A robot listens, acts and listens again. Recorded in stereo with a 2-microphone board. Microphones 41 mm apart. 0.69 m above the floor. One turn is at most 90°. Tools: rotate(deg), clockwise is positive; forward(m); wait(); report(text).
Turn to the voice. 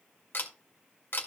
wait()
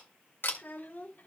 rotate(-55)
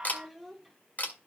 report("Facing the child speaking.")